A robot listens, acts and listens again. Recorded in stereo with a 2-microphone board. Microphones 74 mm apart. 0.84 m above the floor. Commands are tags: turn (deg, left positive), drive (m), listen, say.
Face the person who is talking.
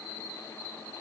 <listen/>
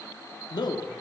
<turn deg="70"/>
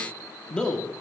<turn deg="10"/>
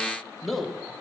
<say>Found it: a man speaking, straight ahead.</say>